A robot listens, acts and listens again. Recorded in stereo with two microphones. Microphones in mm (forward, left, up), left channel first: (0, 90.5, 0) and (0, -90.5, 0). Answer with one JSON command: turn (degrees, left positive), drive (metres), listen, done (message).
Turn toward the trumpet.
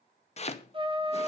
{"turn": -30}
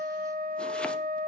{"turn": -115}
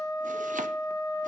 {"turn": 20}
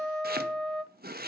{"done": "Facing the trumpet, under 1 m away."}